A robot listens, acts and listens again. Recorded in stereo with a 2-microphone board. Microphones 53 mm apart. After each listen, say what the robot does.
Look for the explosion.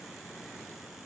Keep listening.
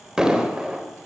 Turn 30° right.
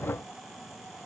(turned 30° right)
Keep listening.
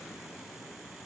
I heard an explosion, but can't make it out now. It was about 15° left or 135° right.